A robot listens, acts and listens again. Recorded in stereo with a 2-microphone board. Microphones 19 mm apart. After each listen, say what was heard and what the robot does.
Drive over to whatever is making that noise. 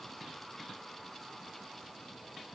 Keep listening.
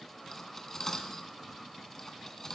The cutlery clinking: about 20° left or 160° left. Turn 20° left.
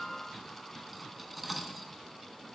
Drive 1.0 m forward.
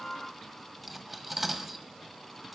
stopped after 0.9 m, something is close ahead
The cutlery clinking is now 10° right. Turn 10° right.
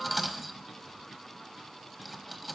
I am next to the cutlery clinking.